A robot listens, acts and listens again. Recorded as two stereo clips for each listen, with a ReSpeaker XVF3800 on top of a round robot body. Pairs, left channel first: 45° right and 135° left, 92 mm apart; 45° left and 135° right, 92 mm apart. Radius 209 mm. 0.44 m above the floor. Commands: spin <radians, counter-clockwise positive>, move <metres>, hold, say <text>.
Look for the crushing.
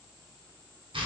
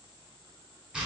hold
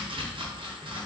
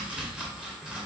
hold
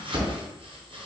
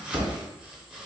say I can't make out crushing to turn to.